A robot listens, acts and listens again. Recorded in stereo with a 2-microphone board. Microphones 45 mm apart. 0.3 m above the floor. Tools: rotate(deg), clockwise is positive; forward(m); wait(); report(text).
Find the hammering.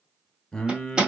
rotate(20)
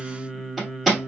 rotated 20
report("Facing the hammering.")